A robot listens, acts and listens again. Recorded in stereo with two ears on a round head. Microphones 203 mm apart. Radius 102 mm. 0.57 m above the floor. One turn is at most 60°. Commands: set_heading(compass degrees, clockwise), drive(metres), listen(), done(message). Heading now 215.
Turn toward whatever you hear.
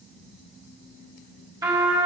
set_heading(230)
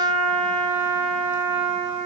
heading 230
set_heading(290)
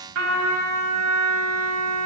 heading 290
set_heading(350)
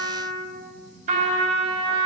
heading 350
set_heading(25)
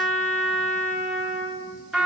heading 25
done("Found it: a trumpet, straight ahead, over 4 m away.")